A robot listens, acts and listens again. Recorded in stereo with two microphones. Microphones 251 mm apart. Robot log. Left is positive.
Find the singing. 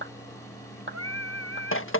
cmd yaw -90
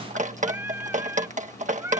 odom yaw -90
note: So it is at 10° right.
cmd yaw -10
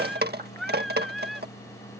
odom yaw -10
end: Found it: singing, straight ahead.